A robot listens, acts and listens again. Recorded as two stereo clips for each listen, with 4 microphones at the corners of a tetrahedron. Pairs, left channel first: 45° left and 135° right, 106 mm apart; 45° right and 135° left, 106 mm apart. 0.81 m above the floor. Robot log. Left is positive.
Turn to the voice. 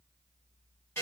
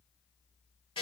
cmd idle
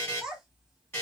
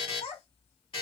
note: The child speaking: 55° right.
cmd yaw -55
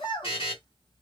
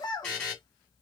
end: Found it: a child speaking, straight ahead.